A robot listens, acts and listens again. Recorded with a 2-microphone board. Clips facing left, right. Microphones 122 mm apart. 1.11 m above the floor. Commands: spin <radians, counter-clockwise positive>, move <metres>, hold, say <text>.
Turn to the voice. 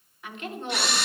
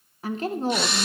spin -0.61
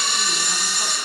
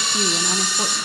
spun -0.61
hold
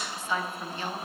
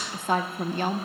spin -1.83
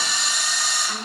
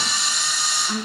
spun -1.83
spin -0.26
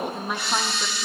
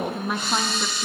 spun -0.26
say Facing the woman speaking, under 1 m away.